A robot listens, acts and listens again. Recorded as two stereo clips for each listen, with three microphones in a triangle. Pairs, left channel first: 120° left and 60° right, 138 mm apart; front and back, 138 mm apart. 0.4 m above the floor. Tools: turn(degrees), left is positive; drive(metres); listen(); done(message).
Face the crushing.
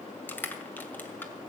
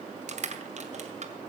turn(degrees=-165)
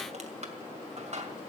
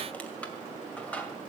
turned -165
turn(degrees=-80)
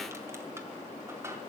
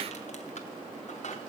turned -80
listen()
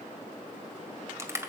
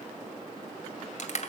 turn(degrees=10)
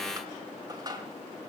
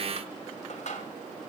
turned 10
done("Facing the crushing, 2 to 4 m away.")